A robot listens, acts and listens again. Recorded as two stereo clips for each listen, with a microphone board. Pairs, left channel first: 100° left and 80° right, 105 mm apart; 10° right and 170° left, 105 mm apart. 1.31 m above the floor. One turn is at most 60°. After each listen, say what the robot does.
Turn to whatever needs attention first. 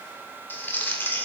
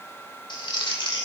Keep listening.
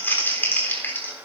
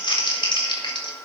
Keep listening.
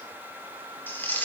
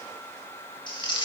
I can't make out anything urgent, only crumpling.